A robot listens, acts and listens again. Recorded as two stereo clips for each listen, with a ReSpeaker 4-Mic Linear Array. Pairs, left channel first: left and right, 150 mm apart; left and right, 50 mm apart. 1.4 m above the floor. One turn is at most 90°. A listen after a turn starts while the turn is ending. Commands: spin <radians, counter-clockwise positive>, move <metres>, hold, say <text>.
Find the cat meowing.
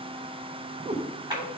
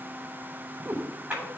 spin -0.70
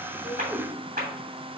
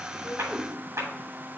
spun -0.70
spin -0.17
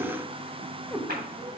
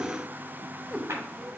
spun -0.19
say Found it: a cat meowing, straight ahead.